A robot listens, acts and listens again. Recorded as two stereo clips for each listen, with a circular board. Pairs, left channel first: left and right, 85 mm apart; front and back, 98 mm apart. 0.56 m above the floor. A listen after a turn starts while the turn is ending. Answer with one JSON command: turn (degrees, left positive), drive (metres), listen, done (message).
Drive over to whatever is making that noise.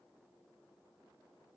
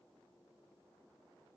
{"listen": true}
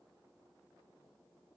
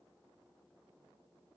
{"listen": true}
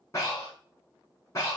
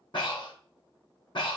{"turn": 35}
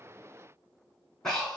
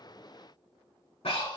{"drive": 1.0}
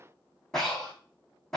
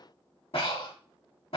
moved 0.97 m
{"drive": 1.0}
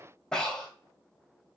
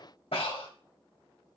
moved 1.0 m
{"turn": 10}
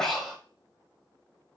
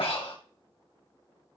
{"drive": 1.0}
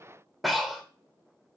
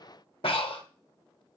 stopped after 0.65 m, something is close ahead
{"done": "I am next to the breathing."}